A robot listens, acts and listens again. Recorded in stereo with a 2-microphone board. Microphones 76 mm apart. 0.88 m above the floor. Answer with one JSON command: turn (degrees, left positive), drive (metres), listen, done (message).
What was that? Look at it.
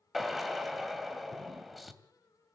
{"turn": 30}
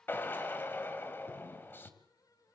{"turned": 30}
{"turn": 150}
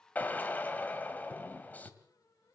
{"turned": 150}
{"turn": 20}
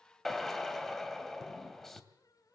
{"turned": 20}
{"done": "Found it: a drill, straight ahead, 2 to 4 m away."}